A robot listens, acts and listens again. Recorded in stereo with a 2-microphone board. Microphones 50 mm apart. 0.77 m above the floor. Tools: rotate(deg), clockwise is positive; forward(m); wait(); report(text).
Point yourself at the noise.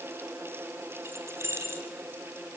rotate(70)
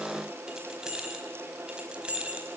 rotate(25)
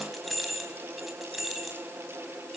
report("Facing the keys jangling, over 4 m away.")